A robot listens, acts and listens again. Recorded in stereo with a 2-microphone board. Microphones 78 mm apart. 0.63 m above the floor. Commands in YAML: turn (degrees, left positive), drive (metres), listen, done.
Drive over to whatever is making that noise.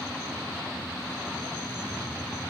listen: true
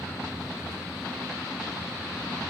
listen: true
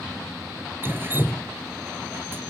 turn: -30
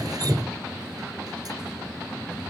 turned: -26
turn: -125
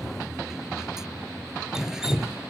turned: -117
drive: 1.0
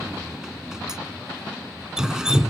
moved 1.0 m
turn: -10
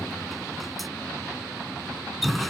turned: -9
drive: 1.0
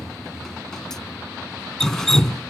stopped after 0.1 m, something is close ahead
done: "Arrived at the dripping, straight ahead."